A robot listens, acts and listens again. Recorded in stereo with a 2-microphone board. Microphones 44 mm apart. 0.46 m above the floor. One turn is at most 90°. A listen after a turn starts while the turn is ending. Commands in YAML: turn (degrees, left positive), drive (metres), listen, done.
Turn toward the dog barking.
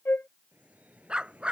turn: -25
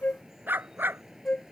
turn: -90
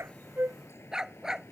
turn: -15
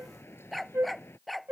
done: "Facing the dog barking."